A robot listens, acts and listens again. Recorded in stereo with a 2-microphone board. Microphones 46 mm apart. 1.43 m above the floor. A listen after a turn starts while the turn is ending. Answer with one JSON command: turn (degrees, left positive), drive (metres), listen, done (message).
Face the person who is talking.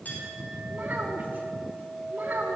{"turn": -45}
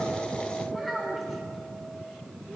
{"done": "Facing the child speaking, 2 to 4 m away."}